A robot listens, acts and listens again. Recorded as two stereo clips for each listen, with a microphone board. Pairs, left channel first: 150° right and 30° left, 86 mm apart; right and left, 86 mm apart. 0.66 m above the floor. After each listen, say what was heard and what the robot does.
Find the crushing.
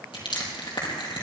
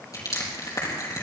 The crushing: 135° right. Turn 135° right.
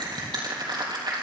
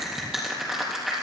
Found it: crushing, straight ahead.